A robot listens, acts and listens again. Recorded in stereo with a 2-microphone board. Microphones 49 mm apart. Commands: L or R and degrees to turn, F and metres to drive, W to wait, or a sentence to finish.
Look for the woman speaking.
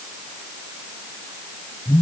W
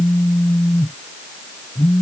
W
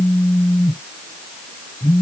I can't make out a woman speaking to turn to.